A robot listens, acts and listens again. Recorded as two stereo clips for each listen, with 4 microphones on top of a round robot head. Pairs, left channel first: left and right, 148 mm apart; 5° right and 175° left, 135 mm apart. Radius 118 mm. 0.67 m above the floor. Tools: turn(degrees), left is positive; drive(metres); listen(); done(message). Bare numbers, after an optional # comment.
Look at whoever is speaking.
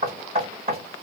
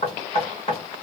listen()
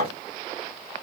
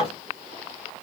listen()
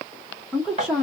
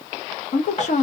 done("Facing the woman speaking.")